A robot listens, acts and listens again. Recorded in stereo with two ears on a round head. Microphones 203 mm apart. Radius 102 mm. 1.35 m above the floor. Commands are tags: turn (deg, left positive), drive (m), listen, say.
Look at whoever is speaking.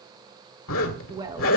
<turn deg="-20"/>
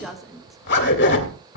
<say>Found it: a woman speaking, straight ahead, 1 to 2 m away.</say>